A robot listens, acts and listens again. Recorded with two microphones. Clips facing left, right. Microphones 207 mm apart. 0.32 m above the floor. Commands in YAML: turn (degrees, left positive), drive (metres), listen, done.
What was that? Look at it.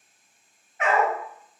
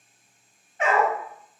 turn: -30
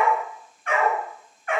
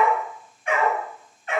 turn: -25
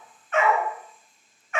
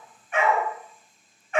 turn: -35
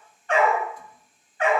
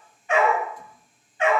turn: -25
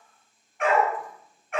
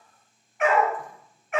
done: "Facing the dog barking, 1 to 2 m away."